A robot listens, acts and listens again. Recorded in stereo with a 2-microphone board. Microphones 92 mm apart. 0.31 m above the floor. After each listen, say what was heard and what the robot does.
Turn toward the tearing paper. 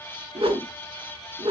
Keep listening.
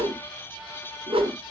Keep listening.
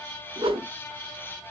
I can't make out tearing paper to turn to.